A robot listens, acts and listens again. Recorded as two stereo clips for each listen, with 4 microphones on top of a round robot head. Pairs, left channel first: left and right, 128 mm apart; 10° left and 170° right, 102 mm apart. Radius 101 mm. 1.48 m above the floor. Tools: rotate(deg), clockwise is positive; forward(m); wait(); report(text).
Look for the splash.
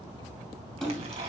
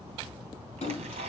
report("Facing the splash, 2 to 4 m away.")